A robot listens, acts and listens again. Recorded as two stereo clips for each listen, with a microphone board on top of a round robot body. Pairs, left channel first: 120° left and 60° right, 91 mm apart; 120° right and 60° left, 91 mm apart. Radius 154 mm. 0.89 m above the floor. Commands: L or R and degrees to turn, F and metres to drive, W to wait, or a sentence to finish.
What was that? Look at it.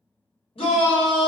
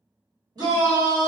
L105
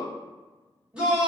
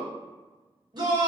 L20
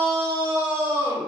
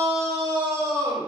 Found it: a shout, straight ahead, 1 to 2 m away.